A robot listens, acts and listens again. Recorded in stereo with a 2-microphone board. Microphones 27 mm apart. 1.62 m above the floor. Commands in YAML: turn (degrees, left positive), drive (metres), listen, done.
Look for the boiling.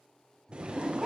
turn: -35
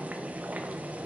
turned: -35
turn: -105
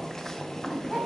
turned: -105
turn: 20
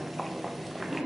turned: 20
done: "Found it: boiling, straight ahead."